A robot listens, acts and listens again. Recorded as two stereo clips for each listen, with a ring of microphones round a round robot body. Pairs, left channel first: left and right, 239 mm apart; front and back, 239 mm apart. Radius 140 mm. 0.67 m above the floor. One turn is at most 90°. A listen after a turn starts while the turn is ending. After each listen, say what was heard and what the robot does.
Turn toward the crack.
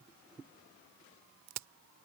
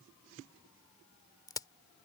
The crack: 75° right. Turn 75° right.
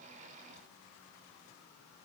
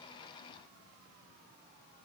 Facing where the crack came from. I can't hear it now.